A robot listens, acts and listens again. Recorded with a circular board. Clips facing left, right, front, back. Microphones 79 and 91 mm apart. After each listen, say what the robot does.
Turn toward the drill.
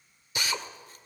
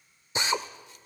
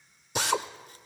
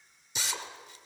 Turn 30° right.
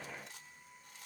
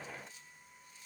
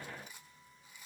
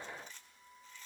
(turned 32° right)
Keep listening.
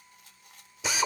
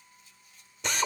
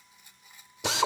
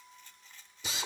Found it: a drill, straight ahead, 1 to 2 m away.